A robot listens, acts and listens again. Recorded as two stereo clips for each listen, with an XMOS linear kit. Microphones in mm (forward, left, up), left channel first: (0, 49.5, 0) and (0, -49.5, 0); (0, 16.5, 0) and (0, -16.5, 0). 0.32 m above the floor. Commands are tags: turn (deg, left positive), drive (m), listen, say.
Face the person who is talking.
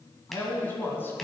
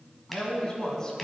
<turn deg="25"/>
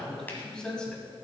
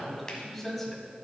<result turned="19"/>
<turn deg="30"/>
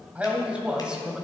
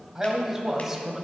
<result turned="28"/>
<turn deg="-10"/>
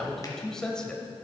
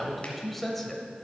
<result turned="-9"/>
<turn deg="10"/>
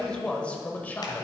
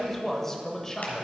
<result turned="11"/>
<turn deg="20"/>
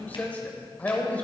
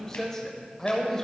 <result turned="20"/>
<turn deg="15"/>
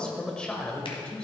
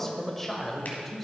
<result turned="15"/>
<turn deg="10"/>
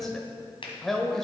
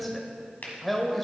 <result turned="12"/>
<say>Found it: a man speaking, straight ahead, 1 to 2 m away.</say>